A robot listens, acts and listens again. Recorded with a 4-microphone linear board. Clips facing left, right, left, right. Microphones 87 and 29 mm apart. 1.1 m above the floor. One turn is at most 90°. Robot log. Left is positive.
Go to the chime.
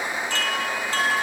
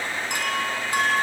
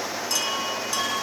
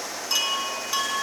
note: The chime: about 15° right or 165° right.
cmd yaw -15
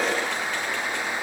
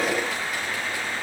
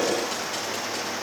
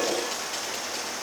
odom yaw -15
cmd idle
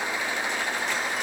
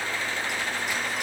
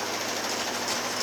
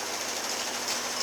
cmd idle
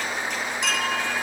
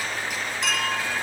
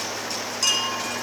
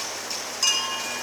cmd fwd 1.0
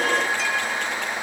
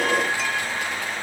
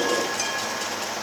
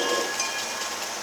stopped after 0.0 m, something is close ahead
cmd idle
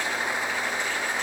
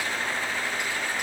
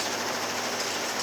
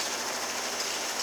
cmd idle
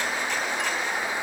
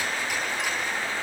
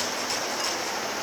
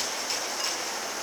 end: I heard a chime from this way, but can't make it out now. I did not reach it.